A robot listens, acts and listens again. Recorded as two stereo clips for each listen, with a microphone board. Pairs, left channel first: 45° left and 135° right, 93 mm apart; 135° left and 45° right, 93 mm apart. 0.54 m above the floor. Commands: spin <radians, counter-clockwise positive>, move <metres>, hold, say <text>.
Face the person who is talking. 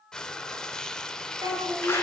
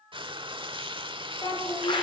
spin 3.14
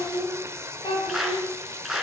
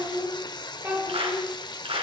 spin 0.35
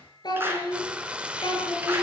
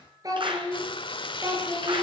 say Found it: a child speaking, straight ahead.